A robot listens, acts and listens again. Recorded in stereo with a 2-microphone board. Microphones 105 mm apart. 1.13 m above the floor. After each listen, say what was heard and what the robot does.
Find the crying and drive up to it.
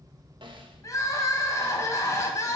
The crying: about 30° left or 150° left. Turn 30° left.
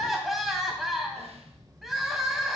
Drive 1.0 m forward.
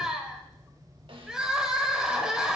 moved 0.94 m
Drive 1.0 m forward.
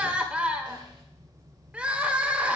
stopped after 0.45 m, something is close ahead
The crying is now 10° right. Turn 10° right.
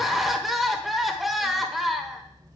Arrived at the crying, straight ahead.